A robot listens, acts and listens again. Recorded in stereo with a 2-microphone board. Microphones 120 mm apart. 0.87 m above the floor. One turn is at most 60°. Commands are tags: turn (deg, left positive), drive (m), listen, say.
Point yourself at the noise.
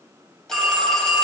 <turn deg="30"/>
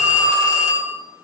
<turn deg="60"/>
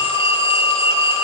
<turn deg="60"/>
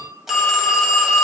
<say>Facing the phone ringing.</say>